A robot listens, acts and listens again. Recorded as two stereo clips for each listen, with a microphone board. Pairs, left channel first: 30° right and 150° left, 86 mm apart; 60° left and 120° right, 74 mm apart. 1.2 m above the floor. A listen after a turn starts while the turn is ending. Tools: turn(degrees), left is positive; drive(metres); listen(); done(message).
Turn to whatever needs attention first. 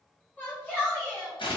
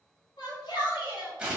turn(degrees=40)
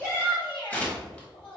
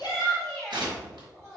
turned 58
turn(degrees=-20)
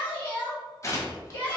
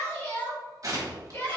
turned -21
done("Found it: a shout, straight ahead, 1 to 2 m away.")